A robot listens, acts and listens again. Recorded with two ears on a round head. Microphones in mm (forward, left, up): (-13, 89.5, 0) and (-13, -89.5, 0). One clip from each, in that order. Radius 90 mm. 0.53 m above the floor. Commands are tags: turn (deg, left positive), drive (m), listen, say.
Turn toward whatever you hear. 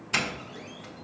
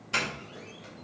<turn deg="30"/>
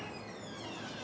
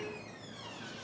<listen/>
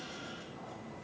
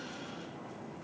<listen/>
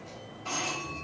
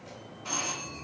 <turn deg="-20"/>
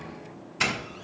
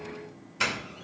<say>Facing the doorbell.</say>